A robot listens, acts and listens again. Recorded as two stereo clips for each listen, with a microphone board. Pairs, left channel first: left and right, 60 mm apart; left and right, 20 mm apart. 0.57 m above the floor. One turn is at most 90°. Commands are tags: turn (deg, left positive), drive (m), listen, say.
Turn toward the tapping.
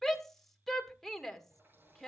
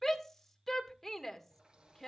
<listen/>
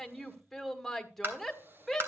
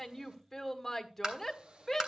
<turn deg="-35"/>
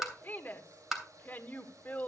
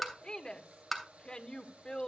<say>Facing the tapping, 2 to 4 m away.</say>